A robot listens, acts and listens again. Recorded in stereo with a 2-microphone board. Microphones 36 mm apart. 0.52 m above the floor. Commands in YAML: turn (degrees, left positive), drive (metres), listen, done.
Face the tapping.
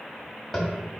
turn: 30
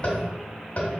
turn: 145
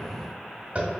turn: -40
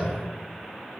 listen: true
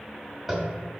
done: "Facing the tapping, 1 to 2 m away."